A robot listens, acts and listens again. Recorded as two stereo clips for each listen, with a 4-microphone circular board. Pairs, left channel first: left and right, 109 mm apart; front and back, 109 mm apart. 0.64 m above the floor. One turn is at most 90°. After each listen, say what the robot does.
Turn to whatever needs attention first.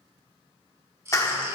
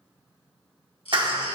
Turn 25° right.
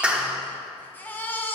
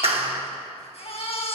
Turn 20° left.
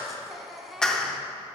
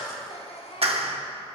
Found it: a baby crying, straight ahead.